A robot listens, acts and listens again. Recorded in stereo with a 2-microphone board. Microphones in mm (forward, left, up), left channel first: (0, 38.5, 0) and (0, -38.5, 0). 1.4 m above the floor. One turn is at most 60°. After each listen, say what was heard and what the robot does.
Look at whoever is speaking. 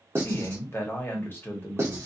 The man speaking: about 30° left or 150° left. Turn 30° left.
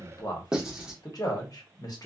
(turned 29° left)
So it is at 120° left. Turn 60° left.
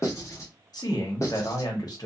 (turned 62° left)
The man speaking is now 60° left. Turn 60° left.
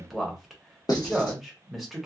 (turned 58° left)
Facing the man speaking, 1 to 2 m away.